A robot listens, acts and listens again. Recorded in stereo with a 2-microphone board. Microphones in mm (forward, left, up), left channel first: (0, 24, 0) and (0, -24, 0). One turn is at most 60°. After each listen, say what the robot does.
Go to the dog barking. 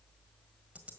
Keep listening.
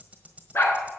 Turn 50° left.
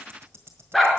Drive 1.0 m forward.
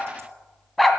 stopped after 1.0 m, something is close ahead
I am next to the dog barking.